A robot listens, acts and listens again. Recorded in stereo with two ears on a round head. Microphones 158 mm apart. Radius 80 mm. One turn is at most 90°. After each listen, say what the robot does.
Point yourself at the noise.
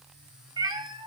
Turn 25° right.
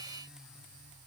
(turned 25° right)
Keep listening.
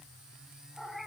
Found it: a cat meowing, straight ahead, 1 to 2 m away.